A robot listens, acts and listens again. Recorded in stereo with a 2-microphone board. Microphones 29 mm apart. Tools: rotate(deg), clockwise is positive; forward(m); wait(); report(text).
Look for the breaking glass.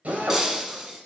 rotate(20)
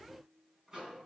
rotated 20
wait()
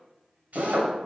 report("I heard breaking glass, but can't make it out now. It was about straight ahead or 140° right.")